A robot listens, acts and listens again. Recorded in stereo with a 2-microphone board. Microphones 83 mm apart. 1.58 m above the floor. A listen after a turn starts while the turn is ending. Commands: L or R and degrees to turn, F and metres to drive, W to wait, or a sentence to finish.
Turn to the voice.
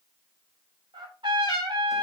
W
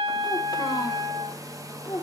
L55
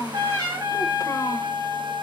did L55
W
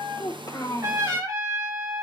L50
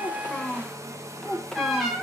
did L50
L10
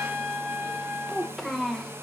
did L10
Found it: a child speaking, straight ahead, 1 to 2 m away.